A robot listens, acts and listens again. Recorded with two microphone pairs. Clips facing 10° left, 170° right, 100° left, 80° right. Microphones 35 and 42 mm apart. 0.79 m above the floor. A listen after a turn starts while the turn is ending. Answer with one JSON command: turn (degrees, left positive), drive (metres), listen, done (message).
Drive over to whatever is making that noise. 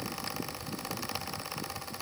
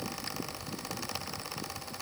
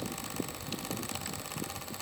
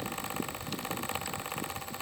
{"listen": true}
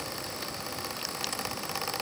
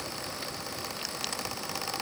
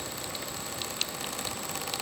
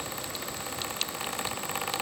{"listen": true}
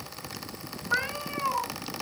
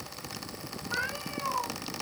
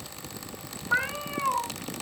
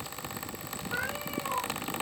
{"turn": 70}
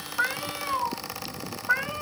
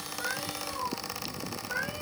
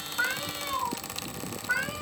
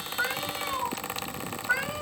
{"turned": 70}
{"drive": 1.0}
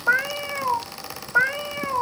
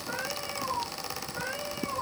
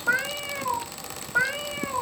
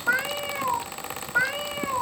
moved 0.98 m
{"turn": 10}
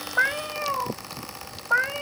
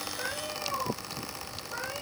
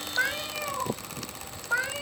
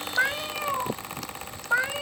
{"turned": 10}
{"drive": 1.0}
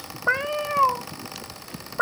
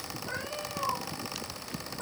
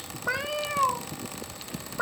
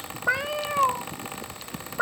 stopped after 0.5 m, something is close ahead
{"done": "I am next to the cat meowing."}